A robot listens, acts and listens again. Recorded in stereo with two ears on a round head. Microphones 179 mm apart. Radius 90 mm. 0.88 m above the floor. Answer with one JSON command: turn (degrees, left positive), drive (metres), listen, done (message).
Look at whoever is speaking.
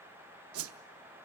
{"listen": true}
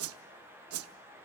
{"listen": true}
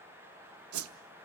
{"done": "I can't make out anyone speaking, only a whoosh."}